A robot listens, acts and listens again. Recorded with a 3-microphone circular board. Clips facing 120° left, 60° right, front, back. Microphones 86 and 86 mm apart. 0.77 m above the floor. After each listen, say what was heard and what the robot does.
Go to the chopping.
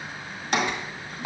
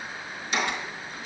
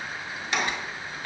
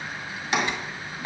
The chopping: 110° left. Turn 110° left.
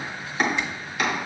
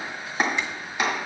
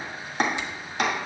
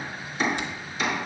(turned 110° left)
Drive 1.0 m forward.
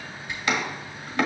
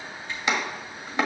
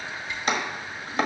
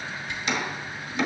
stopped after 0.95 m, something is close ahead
I am next to the chopping.